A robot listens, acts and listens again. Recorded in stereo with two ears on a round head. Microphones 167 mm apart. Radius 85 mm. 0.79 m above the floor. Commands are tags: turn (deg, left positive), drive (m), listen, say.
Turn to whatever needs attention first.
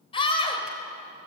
<turn deg="25"/>
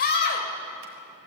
<turn deg="125"/>
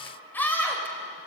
<turn deg="10"/>
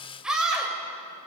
<say>Found it: a scream, straight ahead.</say>